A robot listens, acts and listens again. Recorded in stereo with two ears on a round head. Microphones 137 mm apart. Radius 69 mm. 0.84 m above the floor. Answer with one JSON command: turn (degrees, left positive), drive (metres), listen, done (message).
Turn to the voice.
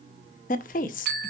{"turn": 55}
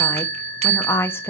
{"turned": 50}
{"turn": 15}
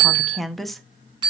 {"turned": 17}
{"done": "Facing the woman speaking, under 1 m away."}